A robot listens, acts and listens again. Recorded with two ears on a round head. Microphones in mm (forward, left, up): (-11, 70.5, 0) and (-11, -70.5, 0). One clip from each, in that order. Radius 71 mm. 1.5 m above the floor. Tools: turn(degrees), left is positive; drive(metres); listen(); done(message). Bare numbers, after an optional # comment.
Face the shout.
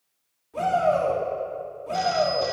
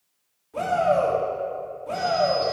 turn(-30)
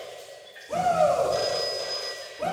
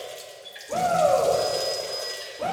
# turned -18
# So it is at 15° left.
turn(15)
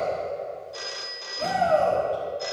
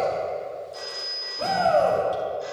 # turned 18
done("Found it: a shout, straight ahead.")